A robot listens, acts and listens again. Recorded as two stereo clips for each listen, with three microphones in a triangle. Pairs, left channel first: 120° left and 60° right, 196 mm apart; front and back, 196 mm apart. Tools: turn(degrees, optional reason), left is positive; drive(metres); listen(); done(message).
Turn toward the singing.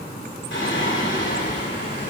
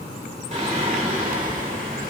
turn(degrees=135, reason="The singing: 135° left.")
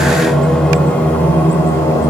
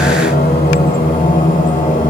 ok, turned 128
turn(degrees=50, reason="The singing is now 50° left.")
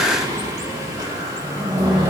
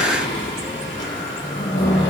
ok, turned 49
turn(degrees=10, reason="The singing is now 10° left.")
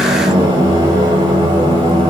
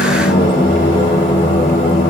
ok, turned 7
done("Found it: singing, straight ahead.")